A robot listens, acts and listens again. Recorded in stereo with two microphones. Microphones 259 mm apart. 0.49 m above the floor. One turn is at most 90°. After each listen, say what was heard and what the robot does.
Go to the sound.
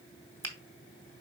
Turn 30° left.
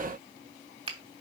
So it is at 20° right. Turn 20° right.
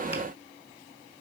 Keep listening.
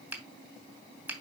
The finger snap is now 10° right. Turn 10° right.
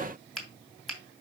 Drive 1.0 m forward.
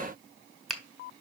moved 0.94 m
Drive 1.0 m forward.
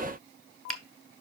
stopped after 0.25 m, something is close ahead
I am next to the finger snap.